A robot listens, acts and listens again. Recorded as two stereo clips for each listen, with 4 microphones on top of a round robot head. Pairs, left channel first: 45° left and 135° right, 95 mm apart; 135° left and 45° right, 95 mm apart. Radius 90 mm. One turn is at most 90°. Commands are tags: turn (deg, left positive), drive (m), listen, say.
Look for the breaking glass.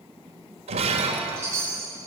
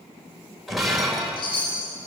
<turn deg="-90"/>
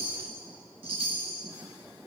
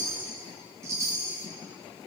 <turn deg="-45"/>
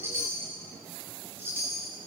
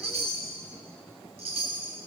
<say>Facing where the breaking glass came from. I can't hear it now.</say>